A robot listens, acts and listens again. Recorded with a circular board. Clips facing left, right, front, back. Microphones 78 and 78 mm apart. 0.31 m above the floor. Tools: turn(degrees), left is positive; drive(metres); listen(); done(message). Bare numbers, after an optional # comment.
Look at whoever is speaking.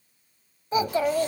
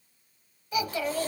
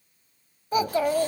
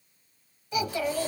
# The child speaking: 40° left.
turn(40)
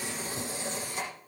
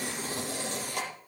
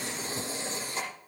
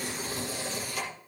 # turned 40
listen()
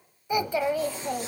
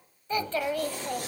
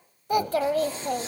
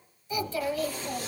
# The child speaking is now 15° left.
turn(15)
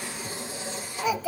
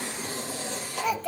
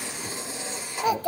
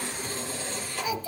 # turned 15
done("Found it: a child speaking, straight ahead, under 1 m away.")